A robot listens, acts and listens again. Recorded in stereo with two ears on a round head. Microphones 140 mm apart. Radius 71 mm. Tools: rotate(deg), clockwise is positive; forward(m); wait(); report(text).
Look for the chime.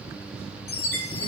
rotate(-75)
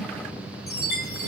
rotate(-20)
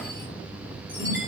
wait()
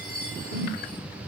rotate(-10)
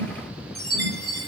report("Facing the chime, over 4 m away.")